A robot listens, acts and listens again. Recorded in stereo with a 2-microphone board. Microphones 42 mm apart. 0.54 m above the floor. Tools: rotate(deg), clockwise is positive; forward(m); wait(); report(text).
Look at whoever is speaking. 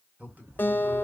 rotate(35)
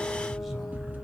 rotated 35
wait()
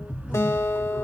wait()
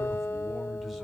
report("I heard a man speaking, but can't make it out now. It was about straight ahead or 110° right.")